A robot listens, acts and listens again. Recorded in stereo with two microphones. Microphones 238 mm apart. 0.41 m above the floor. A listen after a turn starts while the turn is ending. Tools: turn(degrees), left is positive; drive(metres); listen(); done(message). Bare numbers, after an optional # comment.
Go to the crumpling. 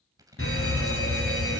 # The crumpling: about 15° right or 165° right.
turn(-15)
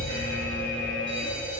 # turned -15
listen()
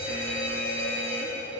listen()
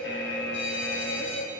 done("I heard crumpling, but can't make it out now. It was about straight ahead or 150° right. I did not reach it.")